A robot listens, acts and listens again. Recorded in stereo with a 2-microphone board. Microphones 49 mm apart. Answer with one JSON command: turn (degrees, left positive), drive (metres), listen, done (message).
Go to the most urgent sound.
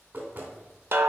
{"listen": true}
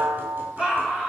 {"turn": -20}
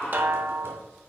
{"drive": 1.0}
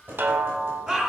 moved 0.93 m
{"turn": -15}
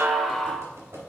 {"listen": true}
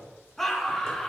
{"drive": 1.0}
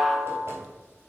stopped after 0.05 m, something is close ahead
{"listen": true}
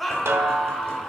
{"done": "Arrived at the scream, straight ahead."}